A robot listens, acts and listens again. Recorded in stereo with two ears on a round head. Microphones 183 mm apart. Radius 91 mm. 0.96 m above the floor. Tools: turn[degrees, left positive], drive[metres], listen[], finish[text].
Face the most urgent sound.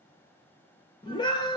Thought: The scream: about 20° left or 160° left.
Action: turn[20]
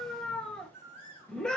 Action: finish[Found it: a scream, straight ahead, 1 to 2 m away.]